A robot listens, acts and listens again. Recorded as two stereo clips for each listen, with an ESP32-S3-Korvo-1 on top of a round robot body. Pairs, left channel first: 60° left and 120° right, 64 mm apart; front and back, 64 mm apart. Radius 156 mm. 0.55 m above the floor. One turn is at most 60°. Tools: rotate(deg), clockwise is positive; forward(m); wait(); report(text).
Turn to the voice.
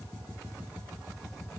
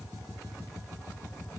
wait()
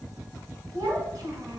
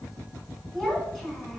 rotate(60)
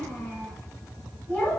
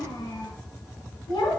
report("Found it: a child speaking, straight ahead, 1 to 2 m away.")